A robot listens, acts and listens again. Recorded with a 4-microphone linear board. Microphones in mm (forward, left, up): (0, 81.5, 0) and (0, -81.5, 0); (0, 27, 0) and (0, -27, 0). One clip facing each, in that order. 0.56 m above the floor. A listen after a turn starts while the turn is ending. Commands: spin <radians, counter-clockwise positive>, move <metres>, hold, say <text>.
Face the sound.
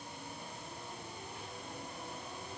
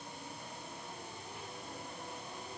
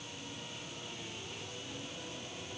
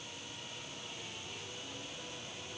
hold
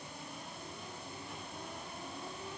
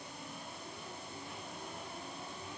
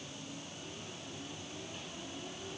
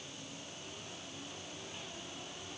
hold
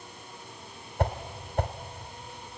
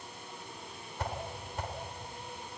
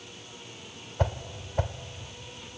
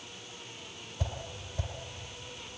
spin 1.05
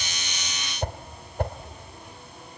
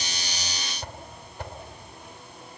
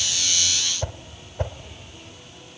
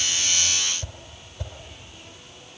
spin 0.96
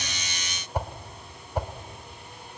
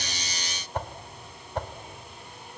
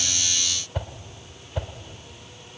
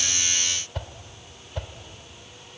spin 0.17
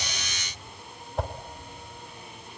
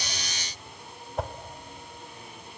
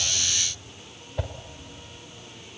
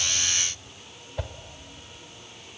say Found it: a whoosh, straight ahead, 1 to 2 m away.